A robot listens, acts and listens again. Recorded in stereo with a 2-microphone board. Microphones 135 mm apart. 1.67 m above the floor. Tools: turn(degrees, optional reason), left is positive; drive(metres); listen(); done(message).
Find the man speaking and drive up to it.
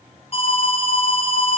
listen()
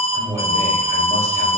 turn(degrees=-20, reason="The man speaking: about 20° right or 160° right.")
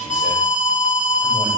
listen()
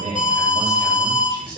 turn(degrees=-140, reason="So it is at 140° right.")
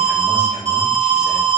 listen()
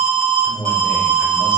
turn(degrees=25, reason="The man speaking is now 25° left.")
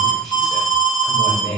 drive(metres=1.0)
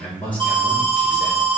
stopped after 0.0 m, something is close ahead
turn(degrees=10, reason="The man speaking is now 10° left.")
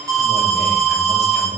done("Something is in my way. I am facing the man speaking but have not reached it.")